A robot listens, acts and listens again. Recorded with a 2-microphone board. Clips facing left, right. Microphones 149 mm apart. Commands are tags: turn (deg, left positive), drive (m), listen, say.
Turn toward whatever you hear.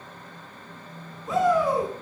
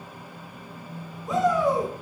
<turn deg="30"/>
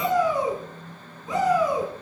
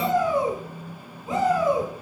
<turn deg="-30"/>
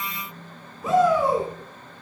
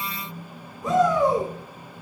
<say>Facing the shout, over 4 m away.</say>